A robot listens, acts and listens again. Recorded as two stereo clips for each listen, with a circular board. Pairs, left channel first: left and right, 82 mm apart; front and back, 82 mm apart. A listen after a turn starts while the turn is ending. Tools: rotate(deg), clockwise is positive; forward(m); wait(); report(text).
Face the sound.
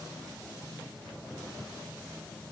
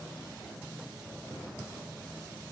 wait()
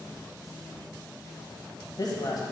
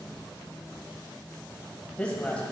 rotate(-75)
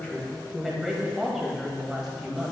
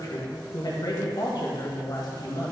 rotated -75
report("Found it: a woman speaking, straight ahead, 1 to 2 m away.")